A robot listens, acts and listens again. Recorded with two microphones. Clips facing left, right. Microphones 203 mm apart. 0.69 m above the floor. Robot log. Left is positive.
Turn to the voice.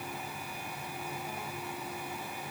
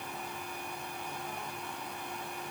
cmd idle
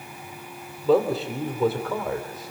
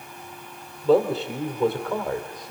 cmd yaw +30
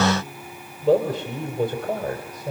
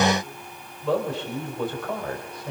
note: So it is at 140° left.
cmd yaw +140
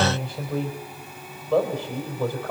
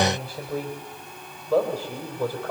note: The man speaking is now 10° right.
cmd yaw -10
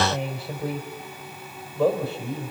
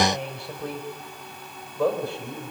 end: Facing the man speaking, 2 to 4 m away.